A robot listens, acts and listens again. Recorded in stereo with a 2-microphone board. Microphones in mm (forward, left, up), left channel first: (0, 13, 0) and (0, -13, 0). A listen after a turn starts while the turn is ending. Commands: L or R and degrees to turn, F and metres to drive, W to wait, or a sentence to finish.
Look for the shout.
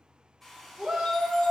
R40
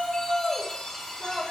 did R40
Facing the shout.